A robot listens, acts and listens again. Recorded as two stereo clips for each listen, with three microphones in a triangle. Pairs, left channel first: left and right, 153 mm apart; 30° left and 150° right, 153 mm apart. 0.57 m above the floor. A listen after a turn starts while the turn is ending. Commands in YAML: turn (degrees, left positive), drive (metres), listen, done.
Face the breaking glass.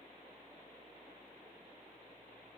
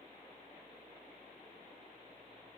listen: true
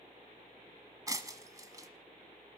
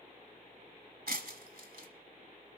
turn: -155
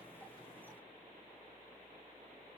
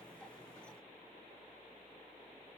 done: "Facing where the breaking glass came from. I can't hear it now."